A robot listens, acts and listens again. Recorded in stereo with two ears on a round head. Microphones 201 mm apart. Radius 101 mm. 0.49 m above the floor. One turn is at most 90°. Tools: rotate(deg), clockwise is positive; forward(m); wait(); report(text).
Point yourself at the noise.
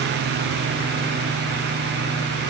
wait()
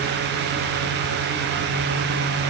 wait()
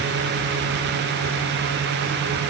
report("I can't make out anything.")